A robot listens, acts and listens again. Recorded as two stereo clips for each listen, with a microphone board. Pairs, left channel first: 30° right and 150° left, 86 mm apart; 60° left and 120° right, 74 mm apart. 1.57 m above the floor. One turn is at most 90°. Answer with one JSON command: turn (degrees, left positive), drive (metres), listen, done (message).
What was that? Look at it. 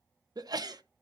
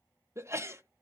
{"turn": -90}
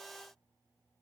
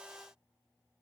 {"turn": -80}
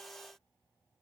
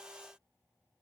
{"done": "Facing where the sneeze came from. I can't hear it now."}